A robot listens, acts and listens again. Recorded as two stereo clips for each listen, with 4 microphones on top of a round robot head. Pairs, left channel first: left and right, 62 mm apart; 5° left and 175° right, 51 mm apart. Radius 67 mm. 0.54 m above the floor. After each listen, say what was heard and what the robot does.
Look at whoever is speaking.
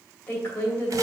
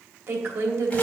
The woman speaking: 155° left. Turn 155° left.
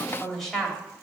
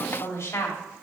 Facing the woman speaking, 2 to 4 m away.